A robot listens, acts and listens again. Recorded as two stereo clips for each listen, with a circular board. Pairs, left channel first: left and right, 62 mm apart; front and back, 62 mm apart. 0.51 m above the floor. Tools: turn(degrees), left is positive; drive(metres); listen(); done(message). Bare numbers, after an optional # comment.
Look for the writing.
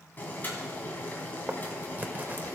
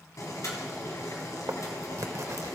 # The writing: 150° right.
turn(-150)
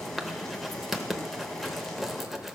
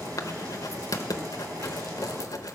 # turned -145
done("Facing the writing.")